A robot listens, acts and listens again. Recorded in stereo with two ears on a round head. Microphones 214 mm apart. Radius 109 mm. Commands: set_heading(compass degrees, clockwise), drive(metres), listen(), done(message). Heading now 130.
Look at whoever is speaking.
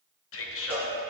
set_heading(70)
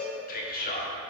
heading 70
set_heading(30)
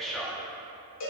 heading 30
done("Found it: a man speaking, straight ahead.")